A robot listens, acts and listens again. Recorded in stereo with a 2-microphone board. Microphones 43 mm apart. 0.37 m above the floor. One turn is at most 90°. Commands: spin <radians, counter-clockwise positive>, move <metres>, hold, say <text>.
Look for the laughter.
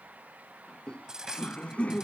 spin 0.44
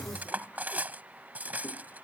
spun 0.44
hold
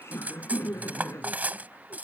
spin 1.57
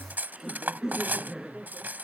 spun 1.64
say Found it: laughter, straight ahead.